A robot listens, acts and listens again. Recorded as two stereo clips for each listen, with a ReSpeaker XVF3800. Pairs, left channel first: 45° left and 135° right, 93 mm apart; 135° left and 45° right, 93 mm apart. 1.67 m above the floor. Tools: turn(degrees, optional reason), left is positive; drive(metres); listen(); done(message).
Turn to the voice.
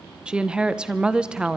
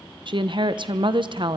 turn(degrees=-55, reason="The woman speaking: 55° right.")
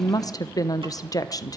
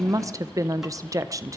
done("Found it: a woman speaking, straight ahead.")